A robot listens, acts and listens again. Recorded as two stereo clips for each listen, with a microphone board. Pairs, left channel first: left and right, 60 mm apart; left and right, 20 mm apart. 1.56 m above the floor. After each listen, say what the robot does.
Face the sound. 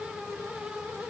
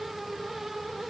Keep listening.
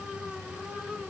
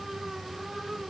Keep listening.
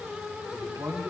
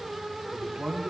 Turn 65° right.
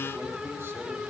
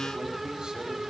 Keep listening.
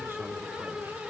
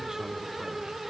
Keep listening.
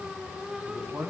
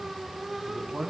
Turn 45° right.
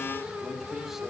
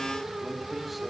Keep listening.
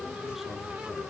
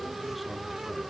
Keep listening.
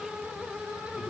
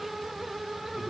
Facing where the man speaking came from. I can't hear it now.